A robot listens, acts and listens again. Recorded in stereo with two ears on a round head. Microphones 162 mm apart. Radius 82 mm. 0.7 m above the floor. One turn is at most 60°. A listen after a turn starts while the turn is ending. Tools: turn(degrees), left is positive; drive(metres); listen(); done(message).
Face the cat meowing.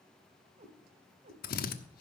turn(degrees=-40)
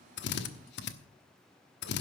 listen()
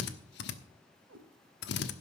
turn(degrees=-60)
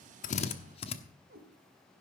turn(degrees=-55)
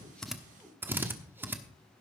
listen()
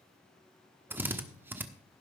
listen()
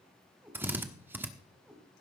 done("Facing the cat meowing, 1 to 2 m away.")